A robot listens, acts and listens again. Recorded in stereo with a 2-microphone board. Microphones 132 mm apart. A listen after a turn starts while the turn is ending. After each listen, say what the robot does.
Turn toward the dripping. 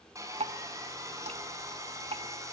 Turn 55° right.
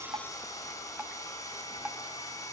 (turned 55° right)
Found it: dripping, straight ahead, 1 to 2 m away.